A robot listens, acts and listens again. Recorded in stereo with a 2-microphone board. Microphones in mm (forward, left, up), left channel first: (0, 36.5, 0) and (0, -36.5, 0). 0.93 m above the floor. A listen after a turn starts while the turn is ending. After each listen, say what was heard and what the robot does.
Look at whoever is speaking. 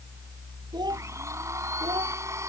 The child speaking: about 75° right or 105° right. Turn 75° right.
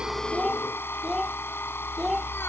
Found it: a child speaking, straight ahead.